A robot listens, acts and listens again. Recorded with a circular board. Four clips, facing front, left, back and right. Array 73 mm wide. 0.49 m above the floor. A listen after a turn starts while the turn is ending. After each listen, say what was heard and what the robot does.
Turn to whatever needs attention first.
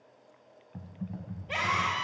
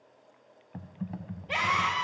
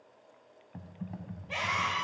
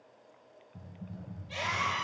The scream: 65° left. Turn 65° left.
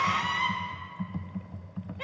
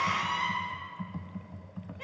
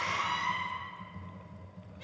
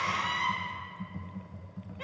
Keep listening.
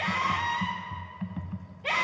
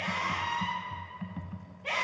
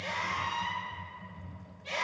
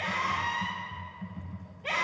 The scream is now 15° right. Turn 15° right.
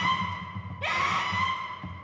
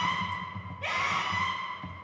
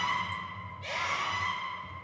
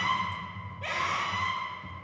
Facing the scream.